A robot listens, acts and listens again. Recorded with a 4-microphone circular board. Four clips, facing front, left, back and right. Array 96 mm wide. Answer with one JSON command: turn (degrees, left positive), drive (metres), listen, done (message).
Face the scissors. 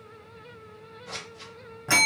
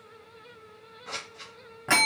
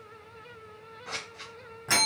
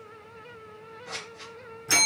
{"turn": 160}
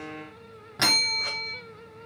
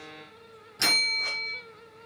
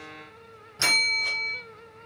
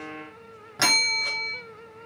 {"listen": true}
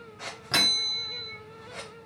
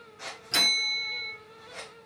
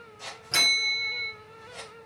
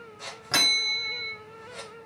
{"turn": 15}
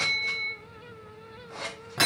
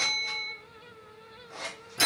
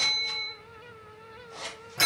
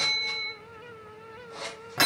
{"done": "Found it: scissors, straight ahead, 2 to 4 m away."}